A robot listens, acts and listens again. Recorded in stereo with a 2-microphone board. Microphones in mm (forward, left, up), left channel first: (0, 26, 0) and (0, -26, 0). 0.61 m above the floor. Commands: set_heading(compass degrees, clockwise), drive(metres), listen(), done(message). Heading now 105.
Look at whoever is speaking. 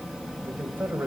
set_heading(145)
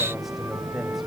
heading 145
listen()
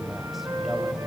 listen()
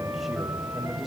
done("I heard a man speaking, but can't make it out now. It was about straight ahead or 100° right.")